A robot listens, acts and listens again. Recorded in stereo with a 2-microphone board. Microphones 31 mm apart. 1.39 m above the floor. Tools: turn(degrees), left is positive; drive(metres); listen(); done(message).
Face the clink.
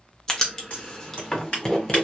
listen()
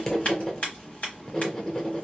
listen()
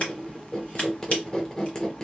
done("I can't make out a clink, only writing and scissors.")